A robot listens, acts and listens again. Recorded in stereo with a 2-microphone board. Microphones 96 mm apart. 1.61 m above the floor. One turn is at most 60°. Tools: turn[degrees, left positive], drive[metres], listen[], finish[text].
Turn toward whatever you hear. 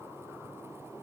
Action: listen[]
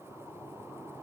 Action: listen[]
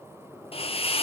Action: turn[60]
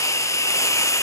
Thought: So it is at 30° left.
Action: turn[30]
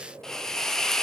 Action: finish[Facing the hiss.]